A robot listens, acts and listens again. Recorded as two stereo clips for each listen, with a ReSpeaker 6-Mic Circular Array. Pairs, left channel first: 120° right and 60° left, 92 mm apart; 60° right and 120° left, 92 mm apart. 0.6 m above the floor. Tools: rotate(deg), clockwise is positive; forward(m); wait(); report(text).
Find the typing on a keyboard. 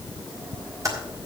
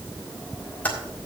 rotate(-10)
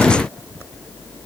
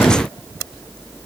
wait()
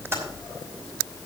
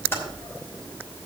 report("Found it: typing on a keyboard, straight ahead.")